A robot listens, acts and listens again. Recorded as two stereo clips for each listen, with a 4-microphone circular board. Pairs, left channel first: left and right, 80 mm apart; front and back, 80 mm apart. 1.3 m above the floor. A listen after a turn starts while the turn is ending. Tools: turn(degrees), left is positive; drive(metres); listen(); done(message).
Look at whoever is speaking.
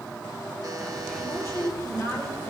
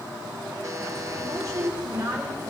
turn(degrees=140)
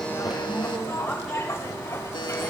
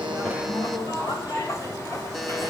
done("Facing the woman speaking, over 4 m away.")